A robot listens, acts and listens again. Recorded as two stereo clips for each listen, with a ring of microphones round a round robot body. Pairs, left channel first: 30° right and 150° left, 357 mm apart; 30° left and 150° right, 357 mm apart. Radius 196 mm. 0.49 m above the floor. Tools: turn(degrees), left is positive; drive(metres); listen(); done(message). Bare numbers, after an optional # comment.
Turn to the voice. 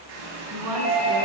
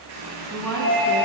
# The woman speaking: 115° left.
turn(115)
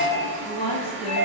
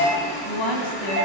# The woman speaking is now 45° left.
turn(45)
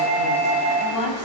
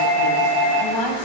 done("Facing the woman speaking.")